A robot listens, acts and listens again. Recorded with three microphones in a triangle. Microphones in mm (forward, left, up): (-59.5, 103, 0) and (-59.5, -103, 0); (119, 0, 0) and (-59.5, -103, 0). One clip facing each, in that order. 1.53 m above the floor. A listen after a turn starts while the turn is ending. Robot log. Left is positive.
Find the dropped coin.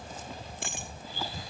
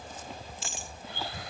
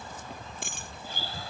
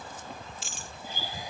note: The dropped coin: 60° left.
cmd yaw +60
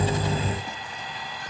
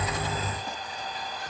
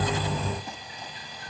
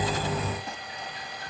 end: Facing where the dropped coin came from. I can't hear it now.